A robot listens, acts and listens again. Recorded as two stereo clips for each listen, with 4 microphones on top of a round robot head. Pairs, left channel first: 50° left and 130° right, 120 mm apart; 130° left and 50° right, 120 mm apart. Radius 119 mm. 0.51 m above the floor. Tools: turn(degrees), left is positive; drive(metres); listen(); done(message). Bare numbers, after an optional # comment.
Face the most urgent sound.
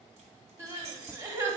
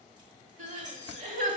# The crying: 60° right.
turn(-60)
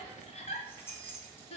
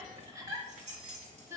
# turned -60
# The crying is now 15° left.
turn(15)
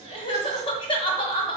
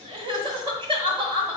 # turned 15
done("Facing the crying, 1 to 2 m away.")